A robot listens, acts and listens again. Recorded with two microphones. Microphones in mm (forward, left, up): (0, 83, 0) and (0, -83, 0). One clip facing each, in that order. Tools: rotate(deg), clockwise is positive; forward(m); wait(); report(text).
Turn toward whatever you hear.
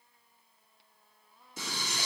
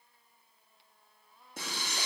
rotate(65)
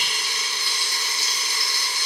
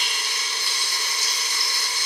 rotate(50)
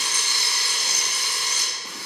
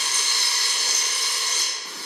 rotate(-15)
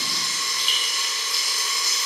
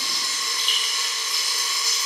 report("Found it: frying, straight ahead, 2 to 4 m away.")